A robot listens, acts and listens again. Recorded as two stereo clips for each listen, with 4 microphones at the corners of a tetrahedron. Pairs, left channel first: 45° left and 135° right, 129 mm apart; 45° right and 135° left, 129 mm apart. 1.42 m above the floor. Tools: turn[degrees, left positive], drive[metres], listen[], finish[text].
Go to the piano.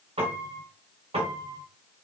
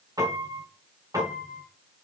Thought: The piano: 165° right.
Action: turn[-165]
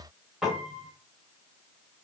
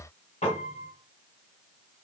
Thought: The piano is now 50° right.
Action: turn[-50]
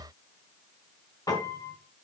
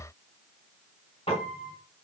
Thought: The piano is now 10° right.
Action: turn[-10]
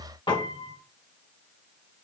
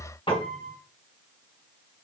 Action: drive[1.0]
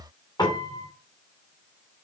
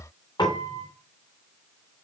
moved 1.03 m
Action: drive[1.0]
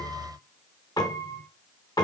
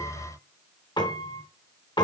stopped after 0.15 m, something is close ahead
Action: finish[I am next to the piano.]